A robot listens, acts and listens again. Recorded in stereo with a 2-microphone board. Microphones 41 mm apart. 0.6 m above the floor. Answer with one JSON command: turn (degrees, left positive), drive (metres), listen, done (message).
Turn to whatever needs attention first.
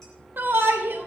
{"turn": -55}
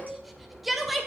{"done": "Found it: a shout, straight ahead."}